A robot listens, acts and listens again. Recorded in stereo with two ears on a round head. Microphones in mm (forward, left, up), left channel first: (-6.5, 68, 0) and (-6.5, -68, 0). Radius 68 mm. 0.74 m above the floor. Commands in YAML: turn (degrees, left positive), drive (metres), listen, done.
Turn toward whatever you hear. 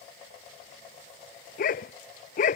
turn: 60
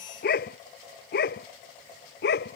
turn: 75
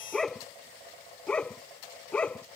done: "Found it: a dog barking, straight ahead."